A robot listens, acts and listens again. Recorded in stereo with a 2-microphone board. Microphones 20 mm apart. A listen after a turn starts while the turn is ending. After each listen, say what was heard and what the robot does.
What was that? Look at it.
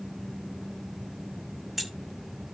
Turn 30° right.
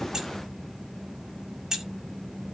So it is at 145° right. Turn 145° right.
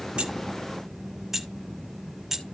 The keys jangling is now 20° right. Turn 20° right.
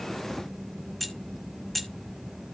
Found it: keys jangling, straight ahead.